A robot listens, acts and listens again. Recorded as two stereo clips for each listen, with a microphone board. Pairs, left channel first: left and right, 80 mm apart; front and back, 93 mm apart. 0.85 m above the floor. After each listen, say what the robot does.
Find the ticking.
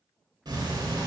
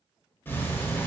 Turn 65° right.
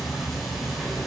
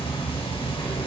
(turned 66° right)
Facing the ticking.